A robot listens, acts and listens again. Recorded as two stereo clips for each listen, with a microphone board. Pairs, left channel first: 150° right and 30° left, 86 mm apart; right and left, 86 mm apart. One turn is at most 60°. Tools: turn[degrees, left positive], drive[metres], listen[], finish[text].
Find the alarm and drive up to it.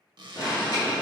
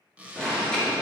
Thought: The alarm: 170° right.
Action: turn[-60]
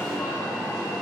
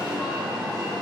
Thought: The alarm is now 115° right.
Action: turn[-60]
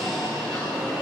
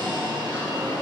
Thought: The alarm is now 65° right.
Action: turn[-60]
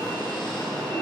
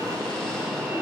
Action: drive[1.0]
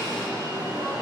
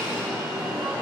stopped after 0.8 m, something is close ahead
Thought: The alarm is now 15° left.
Action: turn[15]
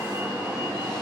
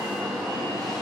Action: finish[I am next to the alarm.]